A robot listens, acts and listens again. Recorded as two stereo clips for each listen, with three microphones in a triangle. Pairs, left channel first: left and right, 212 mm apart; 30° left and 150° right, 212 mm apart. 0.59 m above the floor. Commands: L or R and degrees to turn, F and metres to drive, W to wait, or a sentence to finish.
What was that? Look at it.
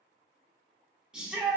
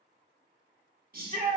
R175
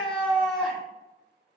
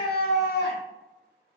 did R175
Found it: a shout, straight ahead, 1 to 2 m away.